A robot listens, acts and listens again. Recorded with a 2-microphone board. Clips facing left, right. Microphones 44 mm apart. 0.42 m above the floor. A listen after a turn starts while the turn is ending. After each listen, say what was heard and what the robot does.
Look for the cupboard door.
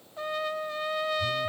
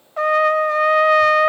Keep listening.
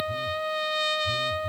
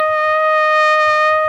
Keep listening.
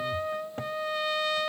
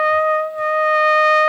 I can't make out a cupboard door, only a trumpet.